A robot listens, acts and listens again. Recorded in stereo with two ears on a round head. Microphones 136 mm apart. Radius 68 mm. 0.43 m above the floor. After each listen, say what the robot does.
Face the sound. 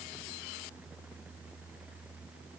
Keep listening.
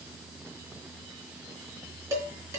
Turn 20° right.
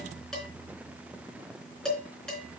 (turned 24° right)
Facing the dishes clattering.